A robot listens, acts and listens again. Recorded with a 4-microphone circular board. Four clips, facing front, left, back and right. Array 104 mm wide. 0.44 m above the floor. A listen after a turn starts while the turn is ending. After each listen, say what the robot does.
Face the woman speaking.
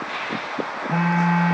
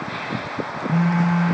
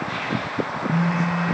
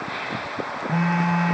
Keep listening.
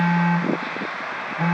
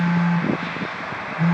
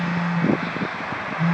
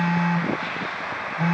Keep listening.
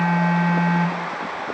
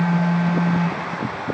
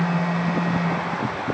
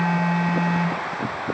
I can't make out a woman speaking, only a phone buzzing.